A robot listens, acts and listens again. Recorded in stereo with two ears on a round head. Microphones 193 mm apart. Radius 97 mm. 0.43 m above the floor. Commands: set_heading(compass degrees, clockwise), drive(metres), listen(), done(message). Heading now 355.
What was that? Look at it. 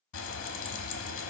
set_heading(290)
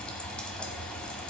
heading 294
done("Found it: frying, straight ahead, 1 to 2 m away.")